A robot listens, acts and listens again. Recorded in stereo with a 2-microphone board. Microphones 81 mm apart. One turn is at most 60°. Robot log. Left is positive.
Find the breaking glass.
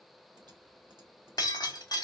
note: The breaking glass: about 60° left or 120° left.
cmd yaw +60
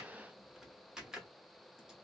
cmd idle
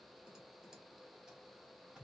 end: I heard breaking glass, but can't make it out now. It was about straight ahead or 60° left.